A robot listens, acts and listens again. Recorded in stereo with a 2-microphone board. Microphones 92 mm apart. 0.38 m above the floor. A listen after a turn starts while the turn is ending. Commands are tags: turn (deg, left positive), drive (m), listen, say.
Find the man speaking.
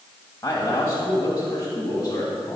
<turn deg="35"/>
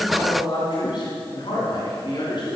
<turn deg="115"/>
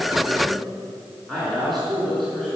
<say>Found it: a man speaking, straight ahead, over 4 m away.</say>